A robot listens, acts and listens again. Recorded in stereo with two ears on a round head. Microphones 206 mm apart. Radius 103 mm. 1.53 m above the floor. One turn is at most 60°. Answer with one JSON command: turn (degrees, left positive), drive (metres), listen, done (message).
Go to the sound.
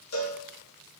{"turn": 60}
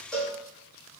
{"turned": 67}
{"drive": 1.0}
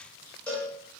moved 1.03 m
{"drive": 1.0}
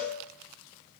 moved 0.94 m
{"drive": 1.0}
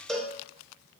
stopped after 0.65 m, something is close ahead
{"done": "I am next to the cowbell."}